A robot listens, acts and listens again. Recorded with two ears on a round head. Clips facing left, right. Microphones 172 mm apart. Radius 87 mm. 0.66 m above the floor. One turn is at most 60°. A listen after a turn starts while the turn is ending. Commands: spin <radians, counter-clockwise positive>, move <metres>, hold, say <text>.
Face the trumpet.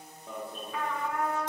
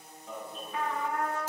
spin 1.05
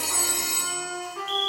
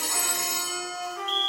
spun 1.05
spin 0.87
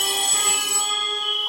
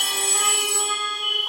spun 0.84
hold
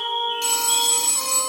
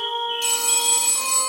hold
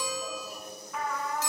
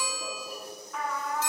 say Found it: a trumpet, straight ahead, 1 to 2 m away.